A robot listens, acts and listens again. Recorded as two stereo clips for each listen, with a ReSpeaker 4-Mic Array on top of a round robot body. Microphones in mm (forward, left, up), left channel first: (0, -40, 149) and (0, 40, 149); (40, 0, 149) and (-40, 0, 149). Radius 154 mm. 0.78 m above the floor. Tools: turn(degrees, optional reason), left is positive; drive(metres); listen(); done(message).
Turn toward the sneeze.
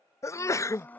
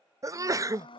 turn(degrees=-135, reason="The sneeze: 135° right.")
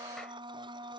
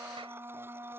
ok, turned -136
done("Facing where the sneeze came from. I can't hear it now.")